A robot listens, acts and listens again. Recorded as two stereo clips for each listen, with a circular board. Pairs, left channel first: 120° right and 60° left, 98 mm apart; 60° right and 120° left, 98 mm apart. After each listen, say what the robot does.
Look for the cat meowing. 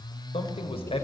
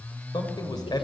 Keep listening.
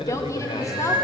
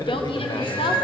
Turn 10° right.
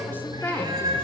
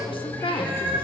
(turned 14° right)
Turn 10° left.
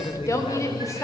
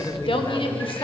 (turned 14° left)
Keep listening.
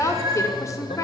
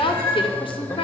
Turn 10° left.
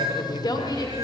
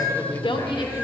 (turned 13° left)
Facing the cat meowing.